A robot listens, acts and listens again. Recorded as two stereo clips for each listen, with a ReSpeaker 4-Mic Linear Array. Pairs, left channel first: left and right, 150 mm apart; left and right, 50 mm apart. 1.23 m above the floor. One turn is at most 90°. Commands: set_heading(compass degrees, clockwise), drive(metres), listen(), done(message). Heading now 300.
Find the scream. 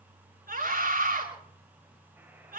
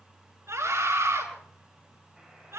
set_heading(30)
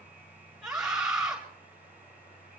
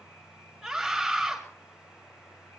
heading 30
done("Found it: a scream, straight ahead.")